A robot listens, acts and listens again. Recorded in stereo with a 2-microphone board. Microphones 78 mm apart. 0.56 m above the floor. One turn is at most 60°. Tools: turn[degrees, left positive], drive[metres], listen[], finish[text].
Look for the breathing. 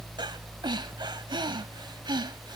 Action: turn[-60]
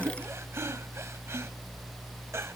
Thought: Nothing new. It was at 30° right.
Action: turn[-30]
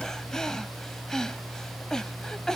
Thought: The breathing is now 10° left.
Action: turn[10]
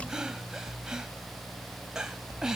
Thought: The breathing is now 10° right.
Action: turn[-10]
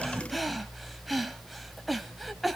Action: finish[Found it: breathing, straight ahead, 1 to 2 m away.]